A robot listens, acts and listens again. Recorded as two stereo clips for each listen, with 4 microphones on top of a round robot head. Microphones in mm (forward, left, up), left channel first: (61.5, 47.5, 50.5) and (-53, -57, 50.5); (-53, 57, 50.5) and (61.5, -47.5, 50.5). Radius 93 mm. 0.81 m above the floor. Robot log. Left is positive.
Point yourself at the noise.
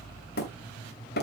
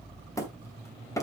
note: The hammering: 65° left.
cmd yaw +65
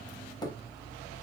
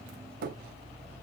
note: The hammering is now 25° right.
cmd yaw -25
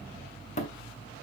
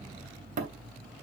end: Found it: hammering, straight ahead.